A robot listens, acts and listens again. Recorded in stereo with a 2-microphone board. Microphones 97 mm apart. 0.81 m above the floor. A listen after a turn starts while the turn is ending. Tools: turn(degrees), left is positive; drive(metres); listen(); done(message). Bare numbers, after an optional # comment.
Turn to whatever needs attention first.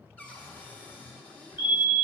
# The fire alarm: about 20° right or 160° right.
turn(-20)
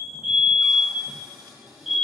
done("Facing the fire alarm, 2 to 4 m away.")